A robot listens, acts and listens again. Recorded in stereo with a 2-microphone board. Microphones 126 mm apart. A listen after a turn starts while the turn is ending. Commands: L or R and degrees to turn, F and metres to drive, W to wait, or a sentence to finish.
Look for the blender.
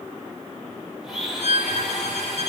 L30
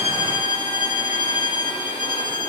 W
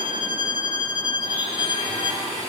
R30
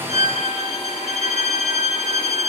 W
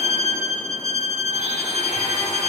W
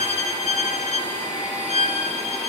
R10
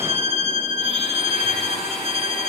W
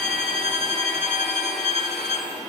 Facing the blender.